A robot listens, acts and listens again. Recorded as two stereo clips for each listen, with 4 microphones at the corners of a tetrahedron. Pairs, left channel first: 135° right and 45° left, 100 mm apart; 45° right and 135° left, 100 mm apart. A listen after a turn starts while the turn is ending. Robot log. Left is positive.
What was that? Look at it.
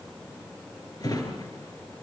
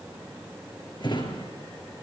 note: The drawer: 85° right.
cmd yaw -85
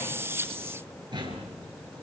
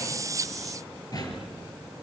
end: Facing the drawer.